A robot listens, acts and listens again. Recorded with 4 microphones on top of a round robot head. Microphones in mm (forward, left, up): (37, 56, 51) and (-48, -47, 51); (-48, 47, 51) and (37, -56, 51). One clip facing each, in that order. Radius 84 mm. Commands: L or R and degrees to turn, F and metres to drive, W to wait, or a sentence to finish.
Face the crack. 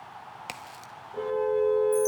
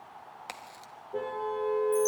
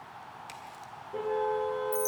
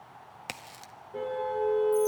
R25
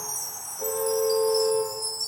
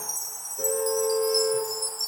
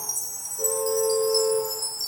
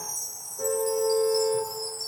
I heard a crack from this way, but can't make it out now.